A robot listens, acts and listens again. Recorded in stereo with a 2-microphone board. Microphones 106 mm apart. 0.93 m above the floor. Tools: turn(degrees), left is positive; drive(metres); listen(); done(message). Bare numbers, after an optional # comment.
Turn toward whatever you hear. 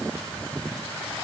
listen()
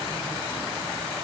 listen()
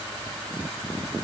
done("I can't make out anything to turn to.")